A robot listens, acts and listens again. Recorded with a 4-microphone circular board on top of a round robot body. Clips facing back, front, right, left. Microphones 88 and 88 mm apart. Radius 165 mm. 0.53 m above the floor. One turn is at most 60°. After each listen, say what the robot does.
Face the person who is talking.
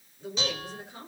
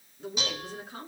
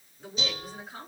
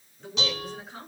Facing the woman speaking, over 4 m away.